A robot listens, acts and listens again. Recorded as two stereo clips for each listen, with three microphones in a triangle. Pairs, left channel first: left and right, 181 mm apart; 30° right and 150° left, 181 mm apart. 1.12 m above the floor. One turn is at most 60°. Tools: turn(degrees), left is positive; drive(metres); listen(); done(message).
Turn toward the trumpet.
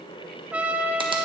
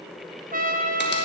turn(degrees=-60)
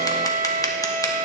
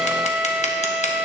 turn(degrees=-60)
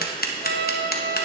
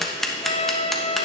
turn(degrees=-60)
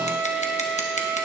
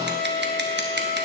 done("Facing the trumpet.")